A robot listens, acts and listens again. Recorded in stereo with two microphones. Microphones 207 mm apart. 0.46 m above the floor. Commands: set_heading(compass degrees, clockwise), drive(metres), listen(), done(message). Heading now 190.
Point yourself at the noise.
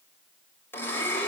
set_heading(160)
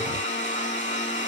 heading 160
set_heading(20)
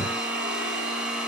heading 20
done("Facing the blender, 1 to 2 m away.")